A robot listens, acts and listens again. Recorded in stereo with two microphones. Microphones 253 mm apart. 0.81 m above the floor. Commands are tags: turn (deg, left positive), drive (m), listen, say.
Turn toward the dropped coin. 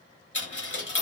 <turn deg="50"/>
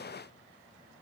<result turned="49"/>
<listen/>
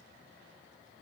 <say>I heard a dropped coin, but can't make it out now. It was about straight ahead or 80° left.</say>